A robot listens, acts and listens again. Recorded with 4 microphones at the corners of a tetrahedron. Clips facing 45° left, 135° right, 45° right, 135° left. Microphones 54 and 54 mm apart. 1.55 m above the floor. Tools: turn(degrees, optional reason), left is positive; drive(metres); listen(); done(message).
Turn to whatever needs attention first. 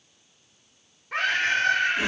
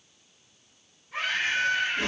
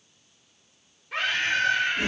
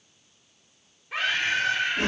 turn(degrees=50, reason="The scream: 50° left.")
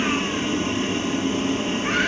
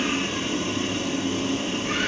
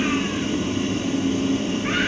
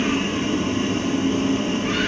listen()
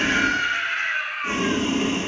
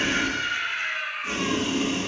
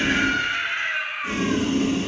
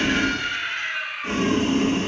turn(degrees=25, reason="The scream is now 25° left.")
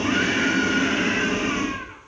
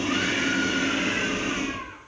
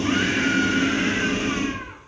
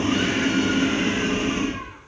listen()
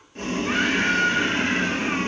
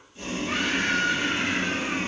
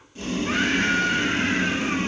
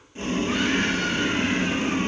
done("Found it: a scream, straight ahead, over 4 m away.")